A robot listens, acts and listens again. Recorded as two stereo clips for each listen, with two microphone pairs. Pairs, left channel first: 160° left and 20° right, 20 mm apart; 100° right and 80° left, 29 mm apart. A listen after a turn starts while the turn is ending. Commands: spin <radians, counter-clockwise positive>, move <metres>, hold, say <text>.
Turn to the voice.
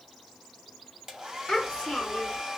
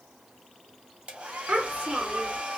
spin 2.18
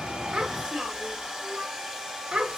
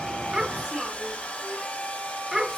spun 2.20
say Found it: a child speaking, straight ahead.